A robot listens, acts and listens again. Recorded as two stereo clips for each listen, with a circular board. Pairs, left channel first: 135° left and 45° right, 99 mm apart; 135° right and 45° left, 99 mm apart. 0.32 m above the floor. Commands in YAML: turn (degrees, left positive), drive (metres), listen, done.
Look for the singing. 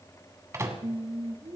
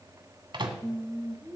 turn: -20
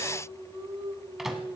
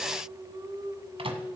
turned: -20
done: "Facing the singing, 2 to 4 m away."